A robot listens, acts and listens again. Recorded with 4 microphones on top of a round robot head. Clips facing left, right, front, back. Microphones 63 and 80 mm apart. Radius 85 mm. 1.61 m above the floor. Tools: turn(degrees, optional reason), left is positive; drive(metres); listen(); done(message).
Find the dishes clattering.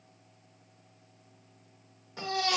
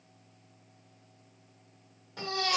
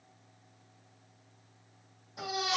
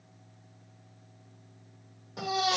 listen()
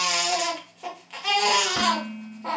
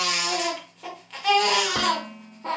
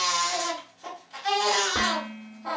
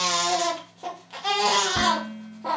turn(degrees=-55, reason="The dishes clattering: 55° right.")
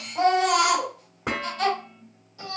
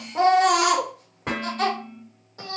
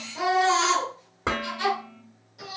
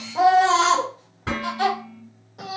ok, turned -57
done("Facing the dishes clattering.")